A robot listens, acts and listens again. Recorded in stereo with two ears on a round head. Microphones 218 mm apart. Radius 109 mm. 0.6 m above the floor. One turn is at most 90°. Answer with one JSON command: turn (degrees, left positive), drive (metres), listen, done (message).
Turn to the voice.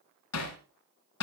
{"listen": true}
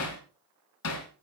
{"listen": true}
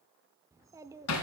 {"turn": -30}
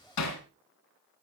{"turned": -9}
{"listen": true}
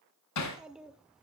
{"turn": -30}
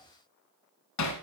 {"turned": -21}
{"listen": true}
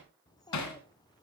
{"turn": 15}
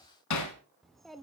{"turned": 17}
{"done": "Facing the child speaking, under 1 m away."}